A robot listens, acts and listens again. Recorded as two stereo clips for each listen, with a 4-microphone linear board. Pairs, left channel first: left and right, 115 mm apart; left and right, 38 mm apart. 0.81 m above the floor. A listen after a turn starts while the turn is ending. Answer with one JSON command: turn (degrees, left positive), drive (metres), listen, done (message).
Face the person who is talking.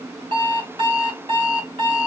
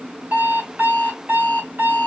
{"listen": true}
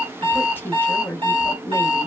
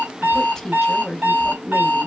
{"turn": 15}
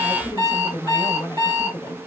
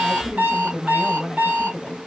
{"turn": 155}
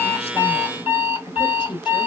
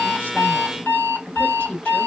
{"turn": 50}
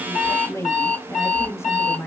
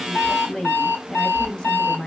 {"turn": 25}
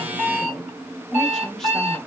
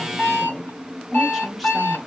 {"done": "Facing the woman speaking."}